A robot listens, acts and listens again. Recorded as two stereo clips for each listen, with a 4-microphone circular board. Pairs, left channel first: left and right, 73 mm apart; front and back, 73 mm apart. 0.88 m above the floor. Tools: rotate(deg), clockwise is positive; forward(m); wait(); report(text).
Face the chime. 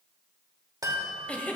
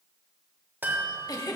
rotate(120)
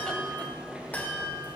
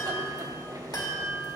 rotate(-25)
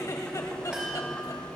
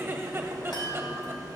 rotate(10)
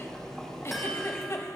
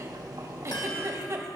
wait()
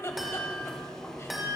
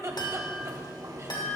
report("Found it: a chime, straight ahead, 2 to 4 m away.")